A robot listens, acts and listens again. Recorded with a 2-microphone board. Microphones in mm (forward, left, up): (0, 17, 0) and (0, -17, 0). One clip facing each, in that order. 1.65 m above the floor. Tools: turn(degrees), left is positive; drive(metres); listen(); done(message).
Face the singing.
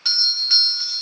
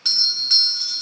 listen()
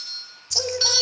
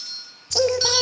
turn(degrees=-40)
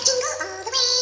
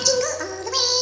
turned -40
done("Found it: singing, straight ahead.")